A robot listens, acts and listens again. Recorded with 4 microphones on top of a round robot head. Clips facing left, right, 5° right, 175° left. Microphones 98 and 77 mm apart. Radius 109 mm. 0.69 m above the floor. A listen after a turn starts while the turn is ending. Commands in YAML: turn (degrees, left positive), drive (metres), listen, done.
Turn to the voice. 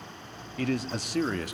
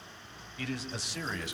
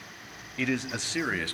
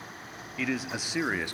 turn: 105
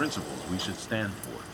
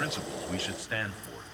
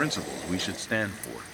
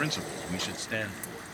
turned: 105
turn: 40
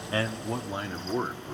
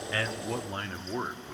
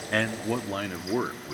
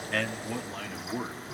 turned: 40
turn: 20
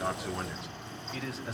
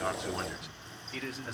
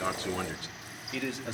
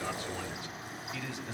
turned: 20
done: "Facing the man speaking."